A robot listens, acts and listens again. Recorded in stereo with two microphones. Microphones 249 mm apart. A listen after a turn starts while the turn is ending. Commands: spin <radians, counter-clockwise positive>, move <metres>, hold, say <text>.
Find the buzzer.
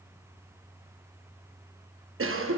hold
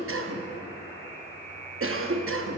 spin 0.79
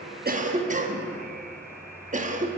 say Facing the buzzer, 2 to 4 m away.